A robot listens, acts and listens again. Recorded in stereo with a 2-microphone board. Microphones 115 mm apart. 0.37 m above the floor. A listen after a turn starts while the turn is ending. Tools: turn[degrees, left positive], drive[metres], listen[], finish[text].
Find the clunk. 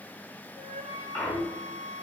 Thought: The clunk: about 15° left or 165° left.
Action: turn[15]
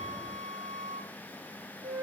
Action: listen[]
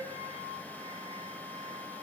Action: finish[I heard a clunk, but can't make it out now. It was about straight ahead or 150° left.]